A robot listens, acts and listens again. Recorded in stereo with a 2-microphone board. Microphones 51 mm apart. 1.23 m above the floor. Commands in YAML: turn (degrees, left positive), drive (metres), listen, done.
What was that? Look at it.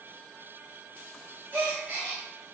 turn: -35
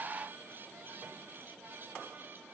listen: true
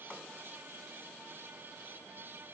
done: "I heard a gasp, but can't make it out now. It was about straight ahead or 110° right."